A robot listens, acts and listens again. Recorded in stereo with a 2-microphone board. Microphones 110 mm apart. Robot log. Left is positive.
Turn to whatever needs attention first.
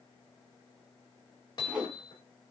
cmd idle
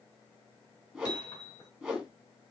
cmd idle
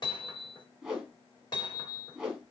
end: I can't make out anything urgent to turn to.